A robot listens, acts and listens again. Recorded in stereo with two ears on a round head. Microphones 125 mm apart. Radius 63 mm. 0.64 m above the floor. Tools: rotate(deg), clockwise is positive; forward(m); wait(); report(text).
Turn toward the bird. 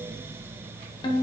wait()
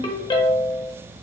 wait()
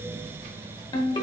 report("I can't make out a bird, only a ringtone.")